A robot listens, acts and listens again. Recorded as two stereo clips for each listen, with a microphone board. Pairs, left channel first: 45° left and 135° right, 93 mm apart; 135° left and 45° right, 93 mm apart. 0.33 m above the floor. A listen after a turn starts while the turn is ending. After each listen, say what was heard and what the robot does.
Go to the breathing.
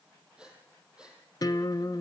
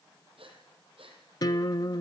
The breathing: 55° right. Turn 55° right.
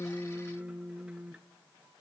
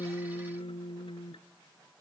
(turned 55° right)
Keep listening.
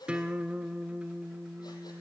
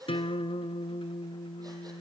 Drive 1.0 m forward.
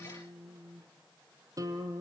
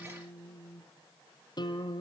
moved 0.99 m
Keep listening.
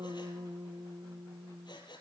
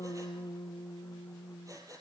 The breathing is now 10° left. Turn 10° left.
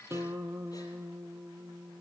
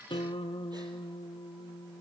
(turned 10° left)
Keep listening.
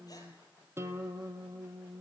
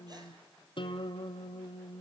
Keep listening.
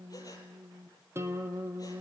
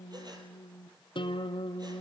Facing where the breathing came from. I can't hear it now. I did not reach it.